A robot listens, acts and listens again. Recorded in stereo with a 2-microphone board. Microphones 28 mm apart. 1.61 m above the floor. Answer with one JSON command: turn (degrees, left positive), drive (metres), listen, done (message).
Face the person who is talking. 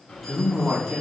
{"turn": -30}
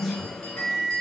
{"done": "Facing the man speaking."}